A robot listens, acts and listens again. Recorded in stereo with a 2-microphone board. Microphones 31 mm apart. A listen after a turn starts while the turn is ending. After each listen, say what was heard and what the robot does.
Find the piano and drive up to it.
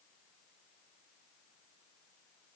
Keep listening.
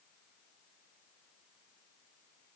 Keep listening.
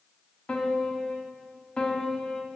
The piano: about 25° left or 155° left. Turn 25° left.
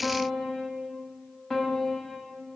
Drive 1.0 m forward.
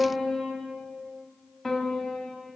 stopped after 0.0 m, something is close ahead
Blocked. The piano is further on, straight ahead.